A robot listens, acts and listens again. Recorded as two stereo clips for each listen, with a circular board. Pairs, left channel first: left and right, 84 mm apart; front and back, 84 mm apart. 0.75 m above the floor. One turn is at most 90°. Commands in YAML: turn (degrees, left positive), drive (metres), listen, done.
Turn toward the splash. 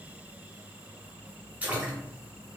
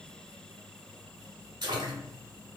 turn: -90
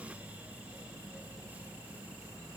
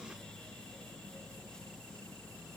turn: -70
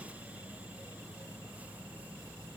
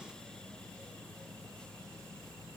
done: "I heard a splash from this way, but can't make it out now."